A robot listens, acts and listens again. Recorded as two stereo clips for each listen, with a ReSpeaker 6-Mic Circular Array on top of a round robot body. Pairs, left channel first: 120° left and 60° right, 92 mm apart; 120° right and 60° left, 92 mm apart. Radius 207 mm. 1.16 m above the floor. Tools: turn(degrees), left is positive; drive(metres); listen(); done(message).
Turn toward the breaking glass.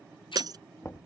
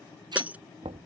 turn(degrees=-15)
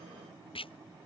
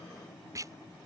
done("Facing where the breaking glass came from. I can't hear it now.")